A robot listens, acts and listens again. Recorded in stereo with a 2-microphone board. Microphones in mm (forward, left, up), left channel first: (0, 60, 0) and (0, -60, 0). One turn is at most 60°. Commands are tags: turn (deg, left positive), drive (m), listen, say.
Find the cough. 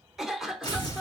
<turn deg="-30"/>
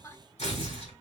<listen/>
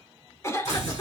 <turn deg="25"/>
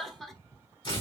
<say>Facing the cough, 1 to 2 m away.</say>